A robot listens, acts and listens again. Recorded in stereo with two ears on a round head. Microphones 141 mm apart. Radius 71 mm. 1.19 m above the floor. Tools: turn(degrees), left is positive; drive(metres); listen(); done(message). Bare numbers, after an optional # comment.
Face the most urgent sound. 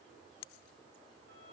listen()
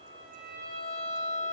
listen()
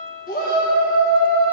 # The shout: about 55° left or 125° left.
turn(55)
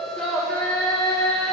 done("Facing the shout.")